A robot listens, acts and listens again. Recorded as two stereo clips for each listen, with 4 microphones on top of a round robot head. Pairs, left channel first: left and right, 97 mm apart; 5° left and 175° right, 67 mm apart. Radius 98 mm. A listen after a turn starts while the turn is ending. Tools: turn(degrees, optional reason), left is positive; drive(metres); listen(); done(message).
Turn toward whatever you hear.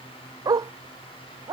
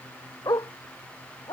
turn(degrees=-35, reason="The dog barking: 35° right.")
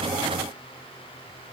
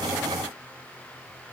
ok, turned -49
turn(degrees=15, reason="Nothing new. It was at 15° left.")
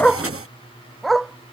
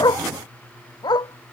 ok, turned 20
done("Facing the dog barking.")